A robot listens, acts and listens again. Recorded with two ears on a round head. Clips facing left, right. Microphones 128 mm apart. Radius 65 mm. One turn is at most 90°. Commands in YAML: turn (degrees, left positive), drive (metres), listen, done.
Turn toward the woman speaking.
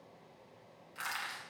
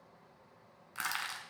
listen: true
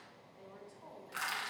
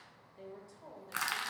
turn: -30
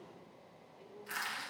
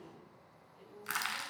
turn: -90
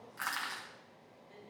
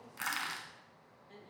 turn: -55
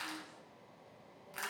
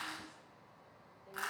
listen: true
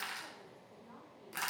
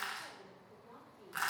turn: -15
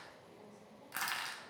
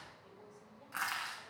listen: true
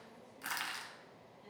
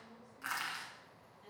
done: "Found it: a woman speaking, straight ahead, over 4 m away."